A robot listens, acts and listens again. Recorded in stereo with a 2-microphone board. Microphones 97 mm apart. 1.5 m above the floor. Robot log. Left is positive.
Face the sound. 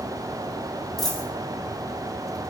cmd yaw +30
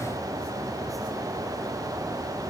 cmd idle
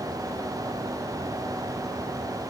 end: I heard a dropped coin, but can't make it out now. It was about 25° right or 145° left.